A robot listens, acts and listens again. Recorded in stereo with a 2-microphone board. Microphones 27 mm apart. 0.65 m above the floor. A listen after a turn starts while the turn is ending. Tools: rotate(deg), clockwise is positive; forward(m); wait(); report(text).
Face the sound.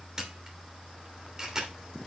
rotate(20)
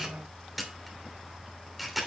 report("Found it: a camera shutter, straight ahead.")